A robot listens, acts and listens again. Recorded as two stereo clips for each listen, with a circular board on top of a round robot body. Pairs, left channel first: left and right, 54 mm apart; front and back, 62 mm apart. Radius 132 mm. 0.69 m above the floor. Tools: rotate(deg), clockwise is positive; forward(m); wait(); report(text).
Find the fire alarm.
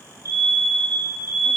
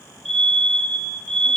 rotate(85)
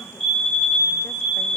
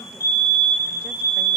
report("Found it: a fire alarm, straight ahead.")